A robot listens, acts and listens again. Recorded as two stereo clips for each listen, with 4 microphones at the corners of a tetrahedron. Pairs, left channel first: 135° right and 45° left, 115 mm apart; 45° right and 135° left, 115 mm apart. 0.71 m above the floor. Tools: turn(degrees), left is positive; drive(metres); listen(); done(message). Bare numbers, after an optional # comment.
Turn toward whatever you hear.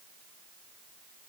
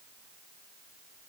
listen()
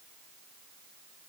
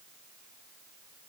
listen()
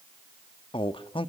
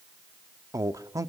# The man speaking: 170° right.
turn(-170)
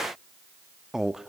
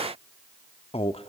# The man speaking is now 40° right.
turn(-40)
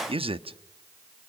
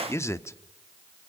# The man speaking is now 15° left.
turn(15)
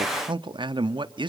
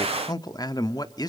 done("Found it: a man speaking, straight ahead, under 1 m away.")